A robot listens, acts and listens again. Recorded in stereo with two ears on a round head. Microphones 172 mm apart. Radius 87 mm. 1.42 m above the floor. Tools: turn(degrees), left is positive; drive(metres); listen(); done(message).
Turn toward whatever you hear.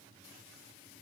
listen()
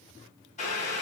turn(degrees=40)
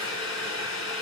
turn(degrees=100)
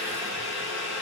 turn(degrees=-10)
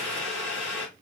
done("Facing the boiling, 2 to 4 m away.")